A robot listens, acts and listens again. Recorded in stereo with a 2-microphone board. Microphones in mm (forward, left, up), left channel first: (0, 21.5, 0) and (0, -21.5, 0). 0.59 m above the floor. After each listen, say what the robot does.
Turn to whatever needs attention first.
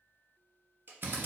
Keep listening.
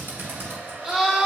Turn 15° right.
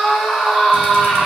Found it: a scream, straight ahead, 1 to 2 m away.